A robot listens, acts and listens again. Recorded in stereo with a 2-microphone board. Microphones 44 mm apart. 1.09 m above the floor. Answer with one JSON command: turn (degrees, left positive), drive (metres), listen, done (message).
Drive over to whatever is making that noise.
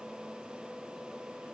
{"listen": true}
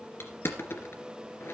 {"turn": 65}
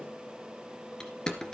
{"turn": 15}
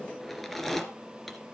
{"drive": 1.0}
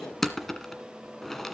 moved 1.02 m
{"drive": 1.0}
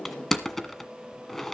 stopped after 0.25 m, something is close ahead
{"turn": 10}
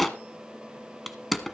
{"done": "I am next to the crushing."}